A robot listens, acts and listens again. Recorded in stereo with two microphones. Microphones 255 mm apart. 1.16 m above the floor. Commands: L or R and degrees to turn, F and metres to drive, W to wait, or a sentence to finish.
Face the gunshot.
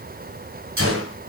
R55
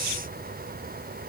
W
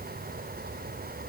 I heard a gunshot, but can't make it out now. It was about straight ahead or 70° right.